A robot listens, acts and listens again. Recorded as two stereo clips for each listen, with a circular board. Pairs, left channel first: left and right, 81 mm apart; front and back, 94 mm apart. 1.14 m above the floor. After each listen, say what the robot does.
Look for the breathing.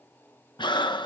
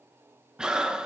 Turn 100° left.
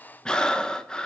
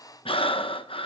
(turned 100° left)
Turn 10° left.
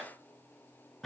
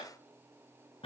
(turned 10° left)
Facing the breathing, under 1 m away.